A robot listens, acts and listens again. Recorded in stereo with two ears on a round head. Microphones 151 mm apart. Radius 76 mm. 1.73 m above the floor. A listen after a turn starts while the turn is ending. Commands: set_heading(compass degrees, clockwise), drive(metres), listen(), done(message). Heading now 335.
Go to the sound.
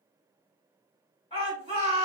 set_heading(300)
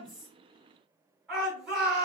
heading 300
drive(1.0)
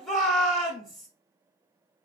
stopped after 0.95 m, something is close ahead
done("Arrived at the shout, straight ahead.")